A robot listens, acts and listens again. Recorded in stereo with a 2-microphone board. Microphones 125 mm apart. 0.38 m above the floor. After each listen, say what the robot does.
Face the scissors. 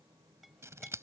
Turn 25° right.
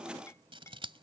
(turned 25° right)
Turn 130° right.
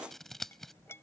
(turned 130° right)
Found it: scissors, straight ahead.